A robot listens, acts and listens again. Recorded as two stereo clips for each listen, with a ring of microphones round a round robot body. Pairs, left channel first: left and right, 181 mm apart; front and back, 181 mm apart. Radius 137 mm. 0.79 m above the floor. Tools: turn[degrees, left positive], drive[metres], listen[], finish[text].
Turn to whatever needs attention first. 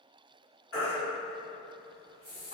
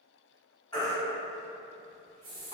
Thought: The baby crying: 70° left.
Action: turn[70]
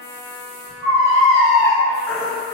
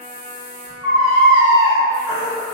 Action: finish[Facing the baby crying, 1 to 2 m away.]